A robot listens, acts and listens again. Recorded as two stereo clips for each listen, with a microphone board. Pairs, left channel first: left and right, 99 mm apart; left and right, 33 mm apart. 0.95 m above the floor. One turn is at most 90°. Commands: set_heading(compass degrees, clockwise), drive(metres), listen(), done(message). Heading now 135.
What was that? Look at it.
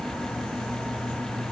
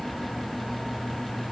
listen()
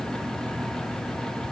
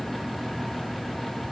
listen()
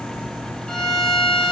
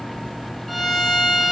set_heading(105)
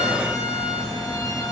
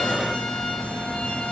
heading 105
listen()
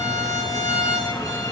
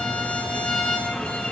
set_heading(15)
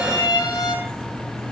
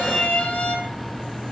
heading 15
set_heading(325)
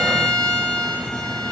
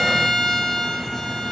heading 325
set_heading(315)
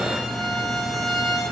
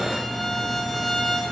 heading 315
done("Facing the violin.")